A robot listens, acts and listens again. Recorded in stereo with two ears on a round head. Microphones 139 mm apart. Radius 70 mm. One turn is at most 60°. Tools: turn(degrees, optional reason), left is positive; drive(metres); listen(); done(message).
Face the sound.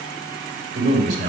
turn(degrees=-55, reason="The man speaking: about 55° right or 125° right.")
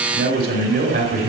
turn(degrees=-60, reason="So it is at 65° right.")
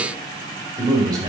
turn(degrees=-25, reason="The man speaking is now 25° right.")
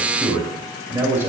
turn(degrees=-15, reason="The man speaking is now 15° right.")
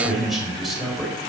done("Facing the man speaking.")